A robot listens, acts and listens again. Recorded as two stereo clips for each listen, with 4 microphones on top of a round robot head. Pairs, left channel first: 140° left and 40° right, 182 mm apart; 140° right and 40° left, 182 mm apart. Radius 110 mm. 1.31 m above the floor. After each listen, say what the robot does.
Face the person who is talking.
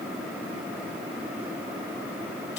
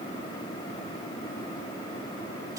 Keep listening.
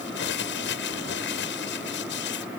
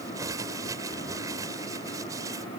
Keep listening.
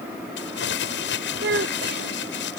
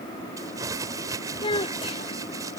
Turn 75° right.
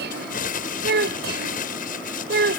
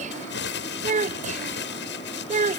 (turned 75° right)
Turn 10° right.
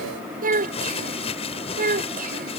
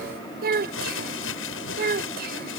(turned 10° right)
Found it: a child speaking, straight ahead.